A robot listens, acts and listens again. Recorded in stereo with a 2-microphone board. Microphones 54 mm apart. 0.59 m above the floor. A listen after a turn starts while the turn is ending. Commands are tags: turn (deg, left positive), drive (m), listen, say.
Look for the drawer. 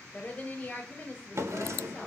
<turn deg="-60"/>
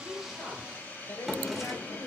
<say>Facing the drawer, 1 to 2 m away.</say>